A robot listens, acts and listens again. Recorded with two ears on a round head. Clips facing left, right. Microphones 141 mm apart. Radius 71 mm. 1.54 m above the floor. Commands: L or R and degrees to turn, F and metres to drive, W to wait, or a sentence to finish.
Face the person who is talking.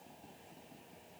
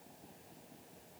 W
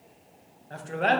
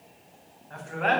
L40
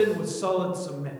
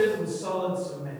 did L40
L100
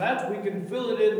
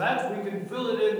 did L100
L20
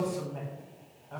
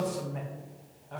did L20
Found it: a man speaking, straight ahead, 1 to 2 m away.